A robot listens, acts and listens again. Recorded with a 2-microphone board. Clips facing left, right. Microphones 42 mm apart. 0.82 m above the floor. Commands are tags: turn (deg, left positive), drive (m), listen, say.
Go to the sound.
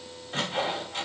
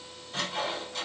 <turn deg="90"/>
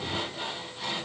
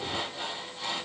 <drive m="1.0"/>
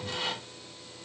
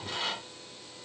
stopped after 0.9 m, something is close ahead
<say>I am next to the sawing.</say>